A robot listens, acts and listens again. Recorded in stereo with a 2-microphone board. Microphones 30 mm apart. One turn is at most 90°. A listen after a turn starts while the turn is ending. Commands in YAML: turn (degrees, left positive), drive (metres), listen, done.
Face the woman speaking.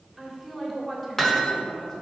turn: 20
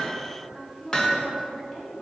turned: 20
turn: 20
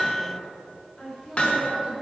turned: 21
turn: 30
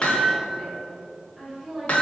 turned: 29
turn: -10
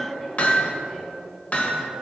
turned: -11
done: "Facing the woman speaking."